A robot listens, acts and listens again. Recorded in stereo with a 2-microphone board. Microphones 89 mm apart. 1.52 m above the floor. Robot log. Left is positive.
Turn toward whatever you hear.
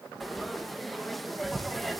cmd yaw +30
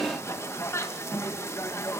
note: So it is at 150° left.
cmd yaw +150
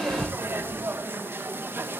note: The frying is now 25° right.
cmd yaw -25
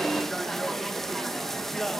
end: Facing the frying, 2 to 4 m away.